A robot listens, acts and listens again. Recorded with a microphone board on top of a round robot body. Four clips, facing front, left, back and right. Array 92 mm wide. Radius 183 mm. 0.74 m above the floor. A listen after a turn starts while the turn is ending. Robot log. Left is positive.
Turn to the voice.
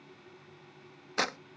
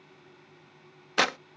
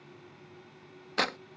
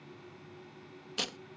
cmd idle
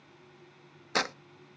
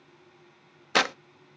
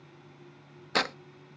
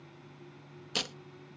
cmd idle
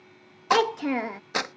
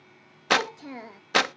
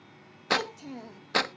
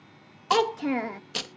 note: The child speaking: 35° right.
cmd yaw -35
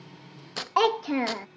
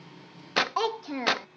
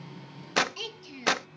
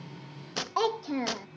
end: Found it: a child speaking, straight ahead.